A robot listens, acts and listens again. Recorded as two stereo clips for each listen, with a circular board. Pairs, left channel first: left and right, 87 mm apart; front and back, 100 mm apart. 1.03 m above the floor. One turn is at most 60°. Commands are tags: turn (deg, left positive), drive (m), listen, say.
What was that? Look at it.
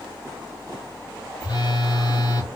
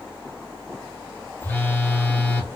<turn deg="60"/>
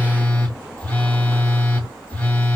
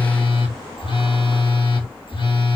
<turn deg="20"/>
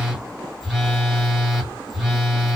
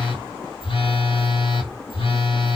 <say>Facing the phone buzzing.</say>